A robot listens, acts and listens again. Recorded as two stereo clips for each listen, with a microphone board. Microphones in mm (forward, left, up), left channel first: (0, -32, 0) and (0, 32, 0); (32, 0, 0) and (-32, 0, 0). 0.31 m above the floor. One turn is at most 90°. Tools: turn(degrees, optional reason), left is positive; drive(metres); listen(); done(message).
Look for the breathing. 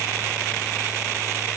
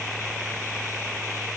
listen()
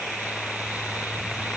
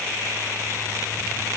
listen()
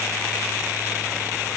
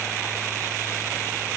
done("I can't make out breathing to turn to.")